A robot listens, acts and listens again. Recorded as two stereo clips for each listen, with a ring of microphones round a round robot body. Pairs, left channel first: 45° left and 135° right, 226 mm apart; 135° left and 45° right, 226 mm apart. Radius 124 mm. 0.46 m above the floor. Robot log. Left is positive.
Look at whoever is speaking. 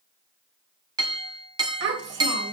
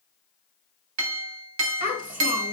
note: The child speaking: 100° right.
cmd yaw -100
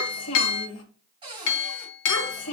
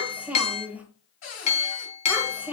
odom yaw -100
note: The child speaking is now 40° left.
cmd yaw +40
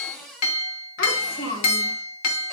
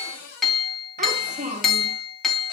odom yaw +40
note: The child speaking is now 10° left.
cmd yaw +10
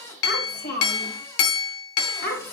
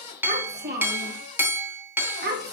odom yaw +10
end: Facing the child speaking, 1 to 2 m away.